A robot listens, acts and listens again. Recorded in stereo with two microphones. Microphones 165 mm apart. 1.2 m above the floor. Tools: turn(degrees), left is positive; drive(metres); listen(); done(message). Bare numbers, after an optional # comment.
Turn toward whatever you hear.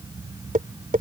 # The tapping: about 55° right or 125° right.
turn(-55)
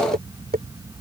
# So it is at 70° right.
turn(-70)
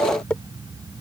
done("Facing the tapping.")